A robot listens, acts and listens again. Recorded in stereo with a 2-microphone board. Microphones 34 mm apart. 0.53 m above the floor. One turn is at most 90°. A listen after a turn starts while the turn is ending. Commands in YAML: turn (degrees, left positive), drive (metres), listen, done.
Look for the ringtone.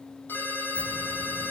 turn: 90
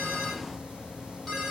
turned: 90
turn: 10
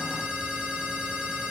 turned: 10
done: "Facing the ringtone, over 4 m away."